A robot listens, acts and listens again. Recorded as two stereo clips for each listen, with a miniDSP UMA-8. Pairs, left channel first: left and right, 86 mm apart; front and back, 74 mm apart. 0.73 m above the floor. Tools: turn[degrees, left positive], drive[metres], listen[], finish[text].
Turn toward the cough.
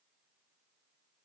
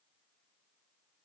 Action: listen[]
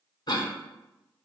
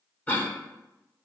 Thought: The cough: 65° left.
Action: turn[65]
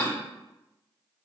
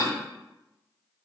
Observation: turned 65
Thought: The cough is now 20° left.
Action: turn[20]
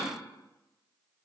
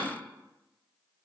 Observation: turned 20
Action: listen[]
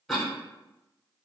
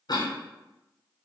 Action: finish[Found it: a cough, straight ahead, under 1 m away.]